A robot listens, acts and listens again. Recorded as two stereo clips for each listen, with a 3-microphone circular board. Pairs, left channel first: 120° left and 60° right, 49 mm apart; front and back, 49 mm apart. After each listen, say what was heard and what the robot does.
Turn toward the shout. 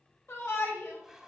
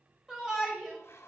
The shout: 105° left. Turn 105° left.
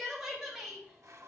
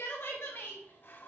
The shout is now 35° left. Turn 35° left.
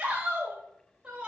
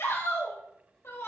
The shout is now 10° left. Turn 10° left.
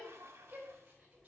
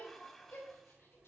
Facing the shout.